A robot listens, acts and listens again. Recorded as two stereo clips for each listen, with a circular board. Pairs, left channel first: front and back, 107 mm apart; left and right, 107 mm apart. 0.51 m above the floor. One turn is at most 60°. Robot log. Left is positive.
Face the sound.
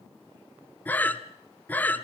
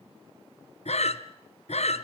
note: The breathing: 75° left.
cmd yaw +60
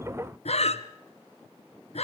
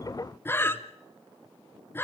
note: The breathing is now 20° left.
cmd yaw +20
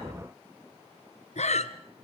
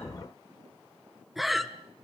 end: Facing the breathing, 1 to 2 m away.